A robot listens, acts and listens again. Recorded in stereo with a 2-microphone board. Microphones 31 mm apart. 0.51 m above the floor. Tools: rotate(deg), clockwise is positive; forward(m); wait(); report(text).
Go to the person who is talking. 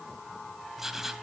wait()
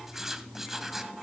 wait()
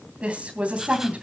rotate(45)
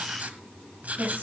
rotate(90)
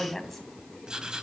forward(1.0)
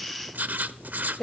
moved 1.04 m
rotate(-10)
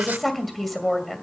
forward(1.0)
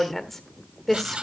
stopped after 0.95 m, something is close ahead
rotate(-10)
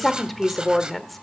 report("I am next to the woman speaking.")